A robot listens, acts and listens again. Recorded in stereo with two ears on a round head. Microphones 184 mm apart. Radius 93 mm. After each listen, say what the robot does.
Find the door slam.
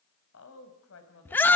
Keep listening.
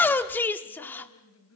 Keep listening.
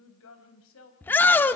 I can't make out a door slam to turn to.